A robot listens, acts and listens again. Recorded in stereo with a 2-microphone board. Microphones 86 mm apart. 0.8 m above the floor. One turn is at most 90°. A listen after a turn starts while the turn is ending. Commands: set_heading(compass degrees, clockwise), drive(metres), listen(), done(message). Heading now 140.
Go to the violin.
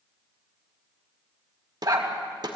listen()
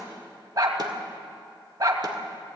listen()
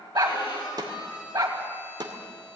set_heading(70)
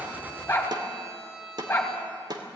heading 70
drive(1.0)
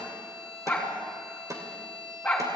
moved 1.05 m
drive(1.0)
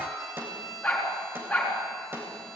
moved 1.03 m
drive(1.0)
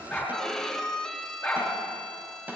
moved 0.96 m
drive(1.0)
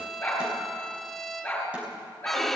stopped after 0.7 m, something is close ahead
done("I am next to the violin.")